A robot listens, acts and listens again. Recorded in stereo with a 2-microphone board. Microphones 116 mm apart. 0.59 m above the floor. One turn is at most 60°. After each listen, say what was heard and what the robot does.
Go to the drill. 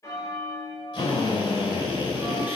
The drill: about 45° left or 135° left. Turn 45° left.
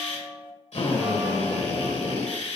So it is at 90° left. Turn 60° left.
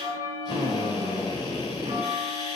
The drill is now 45° left. Turn 45° left.
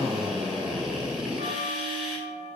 Drive 1.0 m forward.
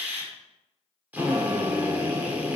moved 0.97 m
The drill is now 20° right. Turn 20° right.
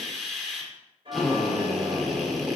Drive 1.0 m forward.
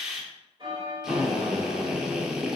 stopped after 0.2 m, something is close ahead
I am next to the drill.